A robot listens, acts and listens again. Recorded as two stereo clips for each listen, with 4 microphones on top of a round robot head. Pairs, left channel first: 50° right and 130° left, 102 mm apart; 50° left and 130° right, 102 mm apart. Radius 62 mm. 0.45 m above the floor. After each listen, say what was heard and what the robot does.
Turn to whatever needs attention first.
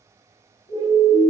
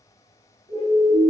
The siren: 90° right. Turn 90° right.
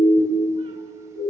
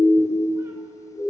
The siren is now 15° right. Turn 15° right.
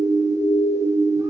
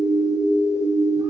Facing the siren, over 4 m away.